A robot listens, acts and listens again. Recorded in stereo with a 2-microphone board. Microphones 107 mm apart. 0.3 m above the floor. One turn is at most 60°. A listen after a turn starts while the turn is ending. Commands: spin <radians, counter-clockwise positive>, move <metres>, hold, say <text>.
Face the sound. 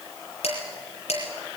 spin 1.05
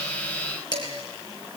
spin 0.79
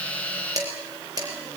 spin -0.61
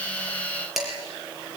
say Facing the dishes clattering, over 4 m away.